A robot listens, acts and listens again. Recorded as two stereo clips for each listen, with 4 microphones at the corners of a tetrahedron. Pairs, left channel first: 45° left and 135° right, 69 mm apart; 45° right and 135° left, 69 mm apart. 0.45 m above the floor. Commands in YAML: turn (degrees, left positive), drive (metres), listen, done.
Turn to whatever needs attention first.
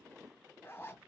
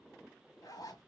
listen: true
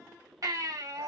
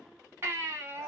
turn: -170
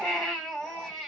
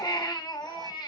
turn: -35
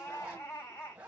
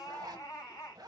done: "Facing the baby crying."